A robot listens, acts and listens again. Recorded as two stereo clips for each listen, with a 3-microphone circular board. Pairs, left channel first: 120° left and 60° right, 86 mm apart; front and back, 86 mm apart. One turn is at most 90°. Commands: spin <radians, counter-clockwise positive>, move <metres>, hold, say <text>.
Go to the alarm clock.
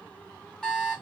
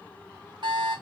spin -1.57
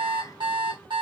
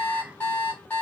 spin -1.22
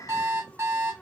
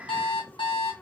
move 1.0
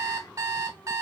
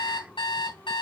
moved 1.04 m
move 1.0
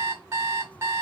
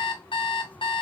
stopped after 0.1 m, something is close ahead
say Arrived at the alarm clock, straight ahead.